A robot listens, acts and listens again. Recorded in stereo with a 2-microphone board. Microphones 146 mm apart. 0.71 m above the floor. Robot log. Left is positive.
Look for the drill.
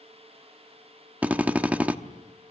cmd yaw -30
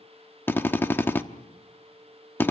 note: So it is at 15° left.
cmd yaw +15
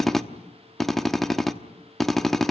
end: Found it: a drill, straight ahead.